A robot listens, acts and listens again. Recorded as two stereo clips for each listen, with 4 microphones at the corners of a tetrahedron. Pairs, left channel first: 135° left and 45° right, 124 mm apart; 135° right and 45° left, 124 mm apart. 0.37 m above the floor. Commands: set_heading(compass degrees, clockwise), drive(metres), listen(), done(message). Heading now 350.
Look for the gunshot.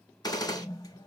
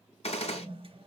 set_heading(160)
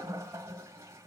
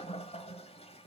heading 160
done("I heard a gunshot from this way, but can't make it out now.")